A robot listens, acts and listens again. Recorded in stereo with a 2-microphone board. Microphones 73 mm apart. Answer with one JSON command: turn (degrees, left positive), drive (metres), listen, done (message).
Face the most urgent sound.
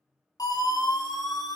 {"turn": 60}
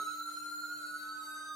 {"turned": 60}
{"done": "Facing the siren, over 4 m away."}